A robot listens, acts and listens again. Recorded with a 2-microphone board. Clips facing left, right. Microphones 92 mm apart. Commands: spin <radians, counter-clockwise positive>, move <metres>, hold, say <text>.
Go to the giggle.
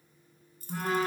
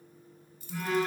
hold
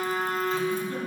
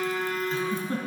spin -0.70
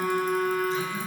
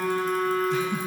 spin -1.83
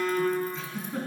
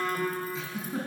move 1.0
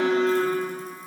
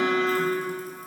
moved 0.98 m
hold
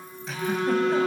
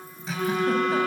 hold
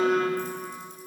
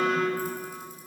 say Facing where the giggle came from. I can't hear it now. I did not reach it.